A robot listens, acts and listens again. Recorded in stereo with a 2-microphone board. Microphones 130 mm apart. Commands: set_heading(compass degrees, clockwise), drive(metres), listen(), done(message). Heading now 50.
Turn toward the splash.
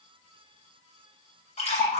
set_heading(0)
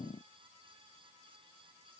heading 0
listen()
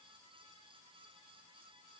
done("I heard a splash, but can't make it out now. It was about straight ahead or 80° left.")